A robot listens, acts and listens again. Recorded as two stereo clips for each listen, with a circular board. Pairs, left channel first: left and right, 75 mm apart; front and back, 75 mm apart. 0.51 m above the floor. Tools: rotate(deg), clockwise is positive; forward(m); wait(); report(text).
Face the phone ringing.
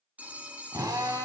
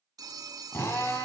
rotate(160)
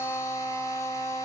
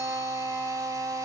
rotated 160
wait()
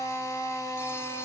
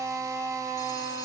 wait()
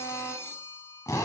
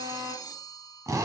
rotate(-30)
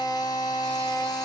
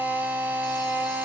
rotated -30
wait()
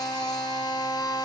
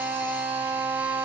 wait()
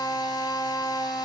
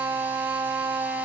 report("I heard a phone ringing from this way, but can't make it out now.")